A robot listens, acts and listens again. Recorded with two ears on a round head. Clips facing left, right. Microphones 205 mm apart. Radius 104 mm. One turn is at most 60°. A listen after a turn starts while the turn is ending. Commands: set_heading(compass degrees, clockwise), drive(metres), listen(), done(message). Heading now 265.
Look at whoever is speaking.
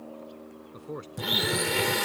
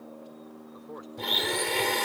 set_heading(230)
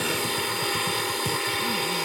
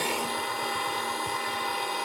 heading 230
listen()
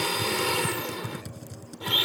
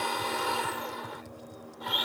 listen()
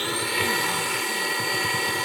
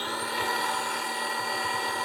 done("I heard a man speaking, but can't make it out now. It was about straight ahead or 110° left.")